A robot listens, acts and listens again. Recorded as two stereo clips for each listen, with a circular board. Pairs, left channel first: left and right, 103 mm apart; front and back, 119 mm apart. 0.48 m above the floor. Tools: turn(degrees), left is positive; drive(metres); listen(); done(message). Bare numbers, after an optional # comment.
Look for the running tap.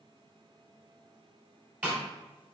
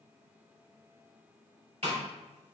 listen()
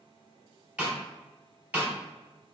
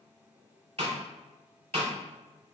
listen()
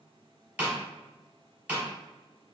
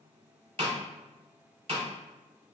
done("I can't make out a running tap to turn to.")